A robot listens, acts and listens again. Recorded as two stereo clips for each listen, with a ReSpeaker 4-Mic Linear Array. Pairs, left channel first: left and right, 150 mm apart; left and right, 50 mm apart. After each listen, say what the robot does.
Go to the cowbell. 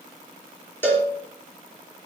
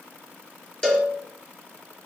Turn 30° left.
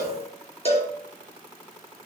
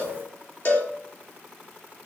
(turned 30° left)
Turn 135° left.
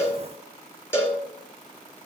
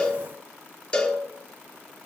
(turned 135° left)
Turn 15° left.
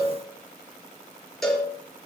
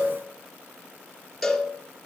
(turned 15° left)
Drive 1.0 m forward.
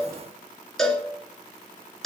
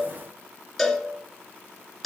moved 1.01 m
Drive 1.0 m forward.
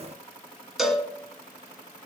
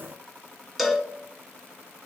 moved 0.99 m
Drive 1.0 m forward.
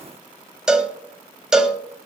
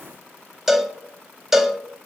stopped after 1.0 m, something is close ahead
Arrived at the cowbell, straight ahead.